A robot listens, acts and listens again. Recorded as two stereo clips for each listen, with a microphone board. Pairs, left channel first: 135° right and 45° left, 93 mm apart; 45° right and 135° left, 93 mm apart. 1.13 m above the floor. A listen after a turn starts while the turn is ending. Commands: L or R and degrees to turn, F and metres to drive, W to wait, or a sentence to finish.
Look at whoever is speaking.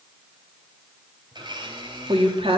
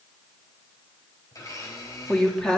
L35
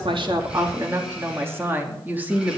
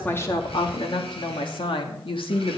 R30
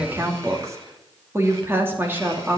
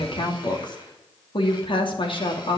R25
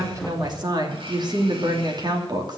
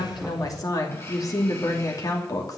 Found it: a woman speaking, straight ahead, 2 to 4 m away.